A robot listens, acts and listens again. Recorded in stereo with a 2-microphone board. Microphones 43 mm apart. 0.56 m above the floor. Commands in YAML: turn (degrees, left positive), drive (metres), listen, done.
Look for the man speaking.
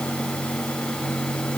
listen: true
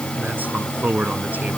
turn: -45
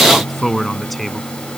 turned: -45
done: "Facing the man speaking."